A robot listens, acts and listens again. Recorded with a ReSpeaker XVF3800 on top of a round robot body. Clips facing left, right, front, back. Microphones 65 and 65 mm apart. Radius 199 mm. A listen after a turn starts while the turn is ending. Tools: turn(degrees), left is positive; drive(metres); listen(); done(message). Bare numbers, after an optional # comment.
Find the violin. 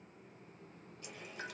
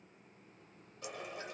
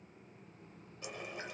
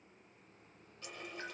listen()
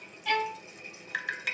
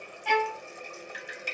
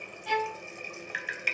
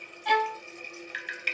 # The violin: 160° right.
turn(-160)
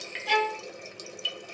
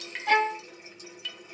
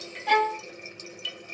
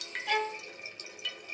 # The violin is now 20° right.
turn(-20)
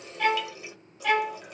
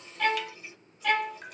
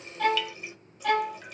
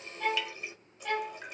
done("Found it: a violin, straight ahead.")